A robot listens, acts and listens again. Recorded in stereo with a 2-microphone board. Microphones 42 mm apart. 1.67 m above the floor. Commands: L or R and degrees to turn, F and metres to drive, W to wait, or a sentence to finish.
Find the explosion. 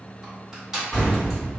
L20
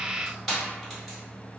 W
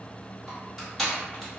I heard an explosion, but can't make it out now. It was about straight ahead or 140° left.